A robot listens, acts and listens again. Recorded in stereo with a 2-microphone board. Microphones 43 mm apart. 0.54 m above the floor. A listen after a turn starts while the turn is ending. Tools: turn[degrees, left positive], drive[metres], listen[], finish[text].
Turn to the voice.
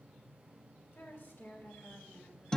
Thought: The woman speaking: about 70° left or 110° left.
Action: turn[70]
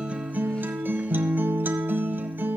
Action: listen[]
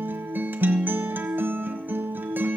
Action: listen[]
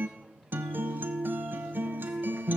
Action: finish[I heard a woman speaking, but can't make it out now. It was about straight ahead or 40° left.]